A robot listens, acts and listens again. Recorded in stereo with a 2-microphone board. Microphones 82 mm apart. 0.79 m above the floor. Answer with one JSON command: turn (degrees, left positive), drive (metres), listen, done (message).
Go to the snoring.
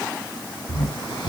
{"turn": 70}
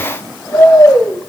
{"turn": 40}
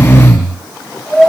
{"drive": 1.0}
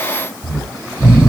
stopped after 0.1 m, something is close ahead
{"turn": -10}
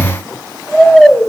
{"done": "Something is in my way. I am facing the snoring but have not reached it."}